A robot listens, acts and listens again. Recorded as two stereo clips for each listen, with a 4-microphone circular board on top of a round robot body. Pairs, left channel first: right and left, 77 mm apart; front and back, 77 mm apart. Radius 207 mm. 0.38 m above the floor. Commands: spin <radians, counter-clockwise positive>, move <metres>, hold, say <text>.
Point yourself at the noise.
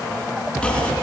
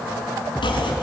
spin -0.17
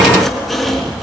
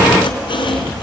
say Found it: chopping, straight ahead, 2 to 4 m away.